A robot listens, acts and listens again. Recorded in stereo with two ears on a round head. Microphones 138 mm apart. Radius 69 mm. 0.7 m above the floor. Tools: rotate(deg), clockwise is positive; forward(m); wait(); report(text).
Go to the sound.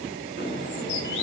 rotate(-90)
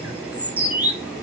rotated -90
rotate(10)
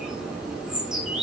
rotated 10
forward(1.0)
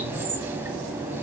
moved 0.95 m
rotate(15)
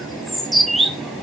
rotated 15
forward(1.0)
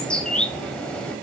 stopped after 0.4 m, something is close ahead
report("I am next to the bird.")